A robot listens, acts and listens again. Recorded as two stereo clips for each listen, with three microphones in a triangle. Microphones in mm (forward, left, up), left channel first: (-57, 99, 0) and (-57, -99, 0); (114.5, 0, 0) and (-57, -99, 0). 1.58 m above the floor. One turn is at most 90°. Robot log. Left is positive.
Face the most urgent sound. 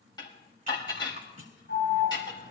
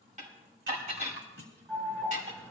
note: The alarm: 120° left.
cmd yaw +90
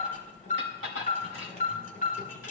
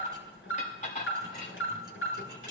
note: The alarm is now 45° left.
cmd yaw +45
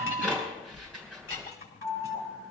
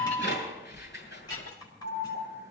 end: Found it: an alarm, straight ahead, over 4 m away.